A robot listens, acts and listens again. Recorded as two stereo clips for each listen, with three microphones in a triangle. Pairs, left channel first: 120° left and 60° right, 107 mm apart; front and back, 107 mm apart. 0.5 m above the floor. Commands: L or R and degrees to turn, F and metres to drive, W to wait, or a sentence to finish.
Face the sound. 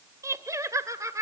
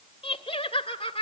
Facing the laughter, 1 to 2 m away.